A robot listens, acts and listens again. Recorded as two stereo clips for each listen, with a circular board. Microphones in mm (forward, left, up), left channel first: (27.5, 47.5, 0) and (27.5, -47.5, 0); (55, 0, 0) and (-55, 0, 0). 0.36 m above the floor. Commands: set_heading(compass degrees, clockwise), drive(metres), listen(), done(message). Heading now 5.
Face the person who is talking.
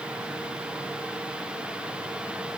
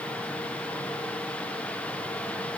listen()
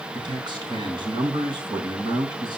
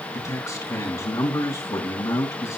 set_heading(65)
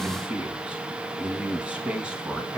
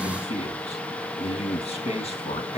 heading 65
set_heading(75)
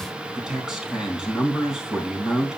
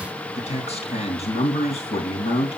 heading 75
done("Facing the man speaking, 2 to 4 m away.")